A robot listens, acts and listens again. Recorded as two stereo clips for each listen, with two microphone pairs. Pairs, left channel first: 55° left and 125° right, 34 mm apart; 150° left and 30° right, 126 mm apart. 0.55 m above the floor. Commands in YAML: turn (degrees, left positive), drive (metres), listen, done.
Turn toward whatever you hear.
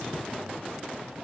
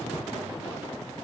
listen: true
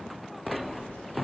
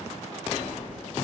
turn: 50
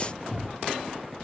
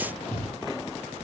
turn: 25
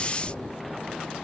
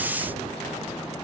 turn: 30
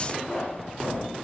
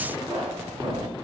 turn: 15
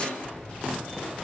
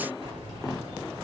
done: "Facing the keys jangling, 1 to 2 m away."